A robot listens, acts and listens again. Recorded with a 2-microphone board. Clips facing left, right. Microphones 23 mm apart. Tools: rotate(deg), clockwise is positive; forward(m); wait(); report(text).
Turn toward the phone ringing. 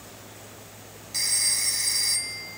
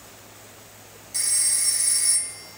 rotate(-30)
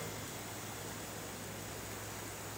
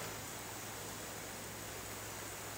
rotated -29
wait()
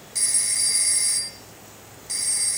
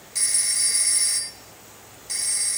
report("Facing the phone ringing.")